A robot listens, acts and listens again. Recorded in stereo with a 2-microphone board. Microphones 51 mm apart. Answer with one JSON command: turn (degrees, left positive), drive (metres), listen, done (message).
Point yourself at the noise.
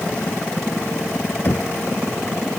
{"turn": 40}
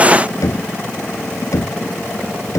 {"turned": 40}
{"turn": 100}
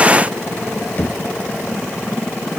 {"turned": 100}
{"turn": 35}
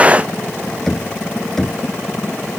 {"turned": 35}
{"turn": 10}
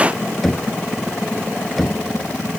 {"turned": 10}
{"done": "Facing the knocking."}